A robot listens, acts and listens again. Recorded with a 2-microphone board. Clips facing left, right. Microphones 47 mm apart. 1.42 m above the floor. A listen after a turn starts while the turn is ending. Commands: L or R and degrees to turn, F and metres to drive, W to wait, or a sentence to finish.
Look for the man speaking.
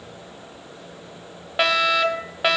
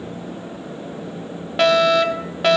W
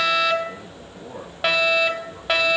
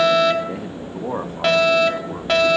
R65
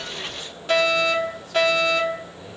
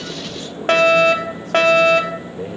W
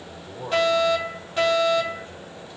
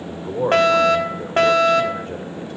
R55
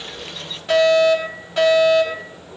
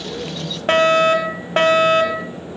W
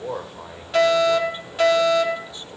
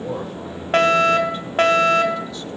L20
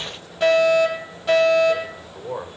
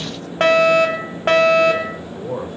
Facing the man speaking, over 4 m away.